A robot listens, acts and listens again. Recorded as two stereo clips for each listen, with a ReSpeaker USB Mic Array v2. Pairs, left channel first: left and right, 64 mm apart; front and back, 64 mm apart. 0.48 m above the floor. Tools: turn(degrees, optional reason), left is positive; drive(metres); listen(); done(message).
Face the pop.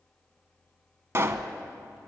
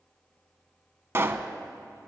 turn(degrees=-135, reason="The pop: 135° right.")
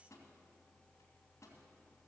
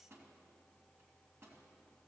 done("I heard a pop from this way, but can't make it out now.")